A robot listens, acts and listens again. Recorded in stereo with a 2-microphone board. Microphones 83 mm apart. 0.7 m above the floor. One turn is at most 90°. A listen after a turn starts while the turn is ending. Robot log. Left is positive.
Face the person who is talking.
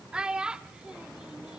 cmd yaw -30
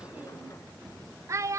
note: So it is at 140° right.
cmd yaw -90
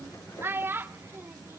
note: The child speaking is now 30° right.
cmd yaw -30
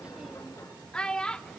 note: The child speaking is now 10° left.
cmd yaw +10
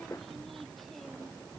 cmd idle
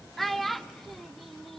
end: Facing the child speaking, 1 to 2 m away.